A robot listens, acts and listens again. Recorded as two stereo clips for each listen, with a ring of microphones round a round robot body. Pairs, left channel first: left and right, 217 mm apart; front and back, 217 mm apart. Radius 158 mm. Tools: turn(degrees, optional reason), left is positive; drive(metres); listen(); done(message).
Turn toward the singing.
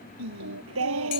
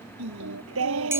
turn(degrees=-135, reason="The singing: 135° right.")
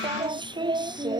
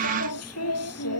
turn(degrees=-20, reason="The singing is now 20° right.")
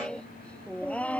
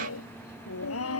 done("Facing the singing.")